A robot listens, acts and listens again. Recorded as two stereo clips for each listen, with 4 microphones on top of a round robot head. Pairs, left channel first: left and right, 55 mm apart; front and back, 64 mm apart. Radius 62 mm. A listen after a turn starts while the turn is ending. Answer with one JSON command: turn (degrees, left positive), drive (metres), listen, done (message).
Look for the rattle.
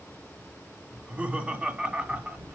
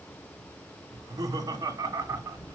{"turn": -40}
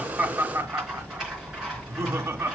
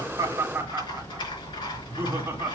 {"turn": -10}
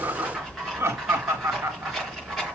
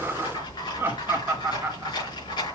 {"done": "Found it: a rattle, straight ahead, over 4 m away."}